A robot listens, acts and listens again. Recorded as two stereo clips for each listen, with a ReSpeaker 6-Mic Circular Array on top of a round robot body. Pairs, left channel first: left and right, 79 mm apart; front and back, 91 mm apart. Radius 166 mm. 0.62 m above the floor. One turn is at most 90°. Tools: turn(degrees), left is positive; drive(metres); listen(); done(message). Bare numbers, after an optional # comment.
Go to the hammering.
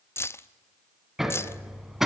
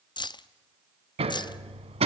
# The hammering: 175° right.
turn(-90)
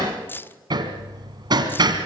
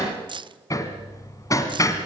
# The hammering is now 55° right.
turn(-55)
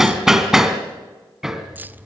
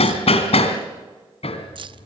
drive(1.0)
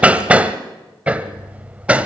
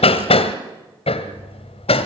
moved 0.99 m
# The hammering is now 15° right.
turn(-15)
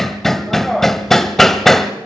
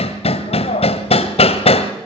drive(1.0)
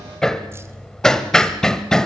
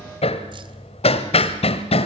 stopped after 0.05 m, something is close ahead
done("I am next to the hammering.")